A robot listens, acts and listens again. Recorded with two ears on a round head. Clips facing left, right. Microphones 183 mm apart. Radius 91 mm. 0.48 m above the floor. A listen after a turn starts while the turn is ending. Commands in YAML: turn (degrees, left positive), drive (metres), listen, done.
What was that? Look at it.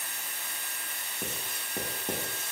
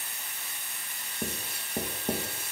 turn: -30
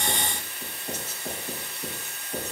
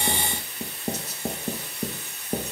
turn: -145
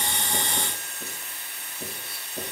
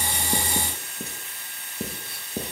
turn: -45
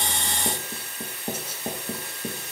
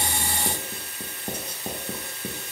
done: "Found it: writing, straight ahead."